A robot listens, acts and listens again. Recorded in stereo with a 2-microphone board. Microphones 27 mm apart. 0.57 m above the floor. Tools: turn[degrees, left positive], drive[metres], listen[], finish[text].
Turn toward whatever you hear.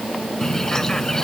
Thought: The bird: about 20° left or 160° left.
Action: turn[20]
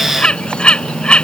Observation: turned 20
Thought: So it is at 140° left.
Action: turn[140]
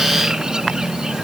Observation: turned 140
Thought: The bird is now 30° right.
Action: turn[-30]
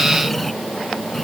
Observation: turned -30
Action: finish[Found it: a bird, straight ahead.]